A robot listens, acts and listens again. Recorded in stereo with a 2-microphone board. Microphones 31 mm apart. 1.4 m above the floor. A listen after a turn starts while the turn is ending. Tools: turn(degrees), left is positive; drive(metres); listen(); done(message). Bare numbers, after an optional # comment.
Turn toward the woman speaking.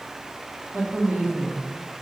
# The woman speaking: about 65° right or 115° right.
turn(-65)
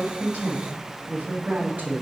# So it is at 75° right.
turn(-75)
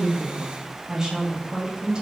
# The woman speaking is now 25° right.
turn(-25)
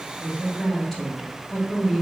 done("Found it: a woman speaking, straight ahead, 2 to 4 m away.")